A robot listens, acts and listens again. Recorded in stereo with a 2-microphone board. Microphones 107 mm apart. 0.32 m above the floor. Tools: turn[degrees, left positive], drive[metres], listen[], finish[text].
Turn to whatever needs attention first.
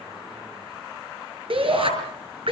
Thought: The shout: about 60° right or 120° right.
Action: turn[-60]
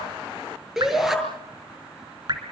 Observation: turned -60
Action: finish[Found it: a shout, straight ahead, over 4 m away.]